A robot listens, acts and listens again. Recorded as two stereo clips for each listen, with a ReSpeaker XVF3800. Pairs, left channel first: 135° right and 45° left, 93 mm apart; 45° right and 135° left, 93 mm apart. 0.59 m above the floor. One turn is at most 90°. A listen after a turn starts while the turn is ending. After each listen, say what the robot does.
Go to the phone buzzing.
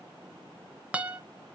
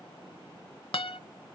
Keep listening.
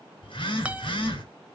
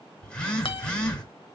Turn 90° right.
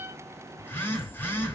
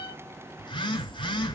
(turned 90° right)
Turn 70° right.
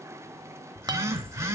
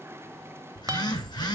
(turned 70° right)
Drive 1.0 m forward.
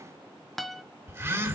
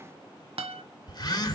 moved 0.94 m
Turn 10° right.
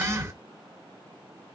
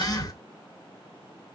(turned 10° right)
Drive 1.0 m forward.
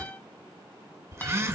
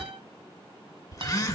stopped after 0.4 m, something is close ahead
Arrived at the phone buzzing, straight ahead.